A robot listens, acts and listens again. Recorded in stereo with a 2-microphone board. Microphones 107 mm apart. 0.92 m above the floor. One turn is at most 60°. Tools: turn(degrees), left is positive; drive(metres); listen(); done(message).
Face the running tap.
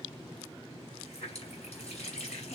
turn(degrees=60)
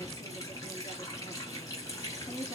turn(degrees=35)
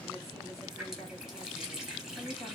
done("Found it: a running tap, straight ahead.")